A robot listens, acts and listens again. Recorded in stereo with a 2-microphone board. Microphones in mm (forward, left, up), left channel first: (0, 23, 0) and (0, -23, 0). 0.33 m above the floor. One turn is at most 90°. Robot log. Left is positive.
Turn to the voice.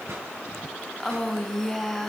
cmd yaw +30
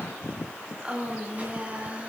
note: So it is at 25° right.
cmd yaw -25
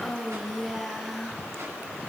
end: Facing the woman speaking, over 4 m away.